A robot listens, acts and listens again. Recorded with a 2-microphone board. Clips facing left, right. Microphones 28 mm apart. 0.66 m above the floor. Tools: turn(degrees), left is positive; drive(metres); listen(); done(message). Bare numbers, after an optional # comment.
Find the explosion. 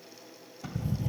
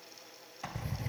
turn(-90)
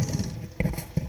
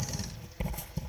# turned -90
done("I heard an explosion from this way, but can't make it out now.")